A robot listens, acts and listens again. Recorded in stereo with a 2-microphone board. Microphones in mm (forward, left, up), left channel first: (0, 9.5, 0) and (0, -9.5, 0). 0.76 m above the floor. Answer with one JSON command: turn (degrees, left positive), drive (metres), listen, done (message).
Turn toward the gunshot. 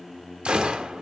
{"turn": -70}
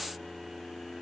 {"listen": true}
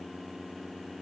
{"done": "I heard a gunshot, but can't make it out now. It was about straight ahead or 40° right."}